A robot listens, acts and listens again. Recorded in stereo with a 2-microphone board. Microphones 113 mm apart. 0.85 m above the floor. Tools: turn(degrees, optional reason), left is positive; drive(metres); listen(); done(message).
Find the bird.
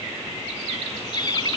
turn(degrees=40, reason="The bird: about 40° left or 140° left.")
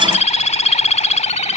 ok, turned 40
turn(degrees=100, reason="So it is at 100° left.")
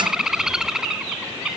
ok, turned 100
done("Found it: a bird, straight ahead.")